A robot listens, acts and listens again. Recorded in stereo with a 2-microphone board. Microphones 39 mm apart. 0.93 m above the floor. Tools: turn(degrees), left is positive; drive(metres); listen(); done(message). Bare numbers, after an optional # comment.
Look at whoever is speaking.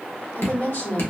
# The woman speaking: about 60° left or 120° left.
turn(60)
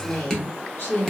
# So it is at 60° left.
turn(60)
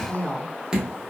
# The woman speaking is now 45° left.
turn(45)
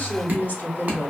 # The woman speaking is now 55° left.
turn(55)
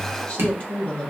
# The woman speaking is now 30° left.
turn(30)
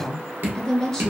done("Found it: a woman speaking, straight ahead.")